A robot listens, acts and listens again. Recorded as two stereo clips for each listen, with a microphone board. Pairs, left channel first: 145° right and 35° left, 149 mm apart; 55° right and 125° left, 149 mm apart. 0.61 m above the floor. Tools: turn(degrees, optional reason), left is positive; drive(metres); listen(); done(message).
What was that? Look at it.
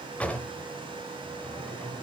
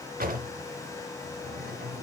turn(degrees=135, reason="The drawer: 135° left.")
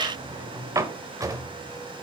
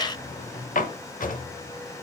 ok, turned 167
turn(degrees=-35, reason="The drawer is now 35° right.")
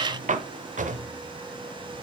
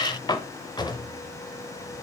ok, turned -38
done("Facing the drawer.")